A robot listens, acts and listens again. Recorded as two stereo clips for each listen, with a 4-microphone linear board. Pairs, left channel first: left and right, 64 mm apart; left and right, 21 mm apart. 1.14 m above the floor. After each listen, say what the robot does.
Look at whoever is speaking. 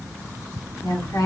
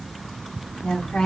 Turn 70° left.
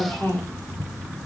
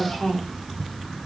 Turn 35° left.
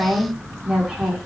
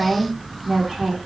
Facing the woman speaking.